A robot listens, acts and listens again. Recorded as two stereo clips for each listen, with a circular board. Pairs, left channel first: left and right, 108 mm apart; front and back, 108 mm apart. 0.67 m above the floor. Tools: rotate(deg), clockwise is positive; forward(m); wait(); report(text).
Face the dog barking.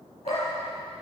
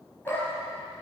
rotate(-75)
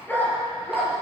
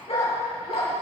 rotate(-20)
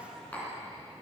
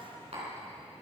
wait()
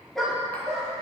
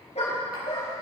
report("Found it: a dog barking, straight ahead.")